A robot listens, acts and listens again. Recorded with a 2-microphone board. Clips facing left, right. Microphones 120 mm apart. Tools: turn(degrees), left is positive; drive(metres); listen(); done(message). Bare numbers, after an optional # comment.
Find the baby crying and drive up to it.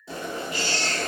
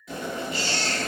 # The baby crying: about 40° left or 140° left.
turn(40)
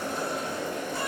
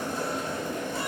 listen()
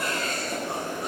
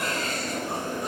listen()
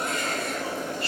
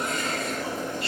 done("I heard a baby crying, but can't make it out now. It was about straight ahead or 100° left. I did not reach it.")